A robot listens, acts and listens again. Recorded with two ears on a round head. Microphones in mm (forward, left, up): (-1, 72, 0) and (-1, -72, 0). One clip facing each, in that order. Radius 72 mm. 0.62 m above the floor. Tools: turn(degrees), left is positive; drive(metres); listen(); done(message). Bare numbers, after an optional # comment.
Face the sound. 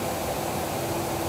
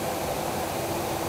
listen()
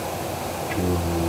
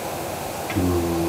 turn(-90)
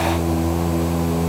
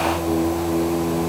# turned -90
done("Facing the singing.")